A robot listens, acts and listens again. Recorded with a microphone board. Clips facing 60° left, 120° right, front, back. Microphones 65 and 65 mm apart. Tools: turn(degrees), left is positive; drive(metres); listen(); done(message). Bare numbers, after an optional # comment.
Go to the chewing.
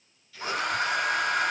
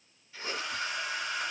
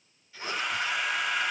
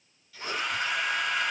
# The chewing: 60° right.
turn(-60)
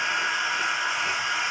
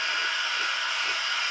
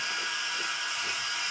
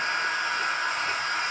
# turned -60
listen()
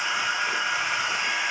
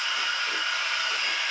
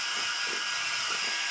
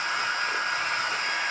listen()
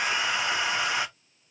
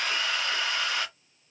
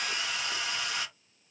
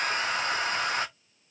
done("I heard chewing from this way, but can't make it out now. I did not reach it.")